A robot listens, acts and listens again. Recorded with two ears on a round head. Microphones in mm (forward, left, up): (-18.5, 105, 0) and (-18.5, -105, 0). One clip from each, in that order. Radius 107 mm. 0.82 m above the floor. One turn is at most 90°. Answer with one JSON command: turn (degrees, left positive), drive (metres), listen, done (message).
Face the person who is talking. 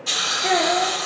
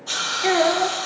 {"turn": -75}
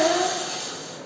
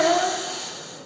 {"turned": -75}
{"turn": -15}
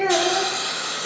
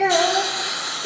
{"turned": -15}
{"done": "Found it: a child speaking, straight ahead, 1 to 2 m away."}